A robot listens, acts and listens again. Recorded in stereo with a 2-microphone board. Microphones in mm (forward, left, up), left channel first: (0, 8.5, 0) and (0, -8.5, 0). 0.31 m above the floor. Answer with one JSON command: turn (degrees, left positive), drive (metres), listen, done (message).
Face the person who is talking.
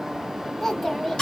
{"turn": 15}
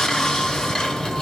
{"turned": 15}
{"listen": true}
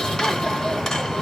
{"listen": true}
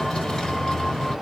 {"done": "I heard a child speaking, but can't make it out now. It was about straight ahead or 150° left."}